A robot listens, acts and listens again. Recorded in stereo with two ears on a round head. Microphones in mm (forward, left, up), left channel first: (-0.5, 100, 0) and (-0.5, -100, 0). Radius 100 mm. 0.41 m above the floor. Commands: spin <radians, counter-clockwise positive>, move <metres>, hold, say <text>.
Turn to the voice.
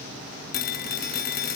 hold
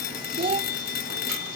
spin -0.44
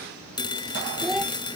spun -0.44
say Facing the child speaking.